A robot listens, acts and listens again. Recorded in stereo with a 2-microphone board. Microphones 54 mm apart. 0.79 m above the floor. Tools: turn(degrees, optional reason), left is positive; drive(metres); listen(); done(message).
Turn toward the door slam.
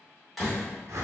turn(degrees=30)
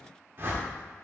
listen()
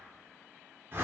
done("I heard a door slam, but can't make it out now. It was about 30° right or 150° left.")